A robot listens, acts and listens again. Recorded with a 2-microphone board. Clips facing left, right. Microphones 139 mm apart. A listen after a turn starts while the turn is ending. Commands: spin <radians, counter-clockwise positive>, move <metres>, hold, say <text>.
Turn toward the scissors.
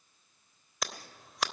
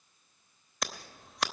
spin 0.52
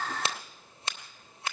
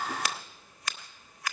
spin 2.62
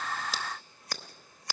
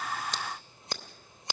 spin -0.44
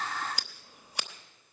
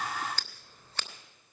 spin 0.26
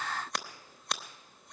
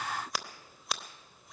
say Facing the scissors, under 1 m away.